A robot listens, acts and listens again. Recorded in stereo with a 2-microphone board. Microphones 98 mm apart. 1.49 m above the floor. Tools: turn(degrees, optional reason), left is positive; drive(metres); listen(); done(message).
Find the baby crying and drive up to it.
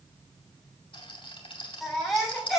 turn(degrees=30)
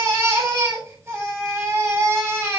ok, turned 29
turn(degrees=-30, reason="So it is at 30° right.")
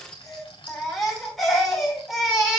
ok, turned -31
drive(metres=1.0)
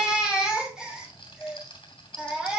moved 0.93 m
turn(degrees=-10, reason="The baby crying is now 10° right.")
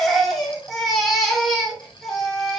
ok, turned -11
drive(metres=1.0)
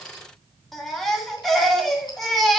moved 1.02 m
drive(metres=1.0)
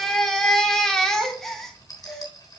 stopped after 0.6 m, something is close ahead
done("Arrived at the baby crying, straight ahead.")